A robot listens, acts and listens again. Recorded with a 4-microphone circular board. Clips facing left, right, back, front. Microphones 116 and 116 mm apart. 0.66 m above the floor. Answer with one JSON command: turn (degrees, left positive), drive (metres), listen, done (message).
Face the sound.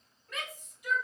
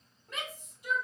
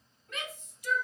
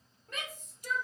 {"turn": -35}
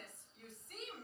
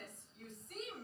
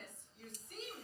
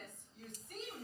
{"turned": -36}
{"done": "Found it: a shout, straight ahead."}